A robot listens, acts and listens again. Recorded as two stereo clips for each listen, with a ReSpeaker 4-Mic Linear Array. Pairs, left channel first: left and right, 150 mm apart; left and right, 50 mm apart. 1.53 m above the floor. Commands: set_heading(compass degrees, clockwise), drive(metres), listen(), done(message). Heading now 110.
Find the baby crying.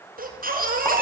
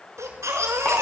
set_heading(200)
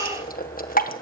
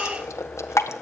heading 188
set_heading(198)
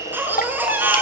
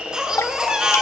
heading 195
set_heading(210)
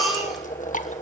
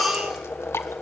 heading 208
done("Found it: a baby crying, straight ahead, over 4 m away.")